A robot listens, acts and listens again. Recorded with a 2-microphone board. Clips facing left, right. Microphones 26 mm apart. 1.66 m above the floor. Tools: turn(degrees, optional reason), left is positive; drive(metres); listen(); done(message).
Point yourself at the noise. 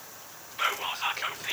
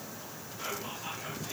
turn(degrees=65, reason="The whispering: about 65° left or 115° left.")
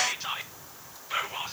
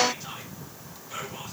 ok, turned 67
turn(degrees=45, reason="So it is at 45° left.")
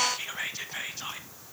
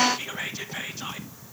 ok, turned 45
done("Facing the whispering, under 1 m away.")